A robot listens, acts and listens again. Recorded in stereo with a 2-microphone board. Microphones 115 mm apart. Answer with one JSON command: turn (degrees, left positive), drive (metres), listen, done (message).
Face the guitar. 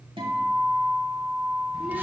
{"turn": -50}
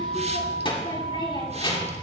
{"turn": -75}
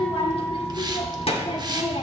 {"listen": true}
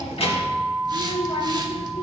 {"done": "Facing the guitar."}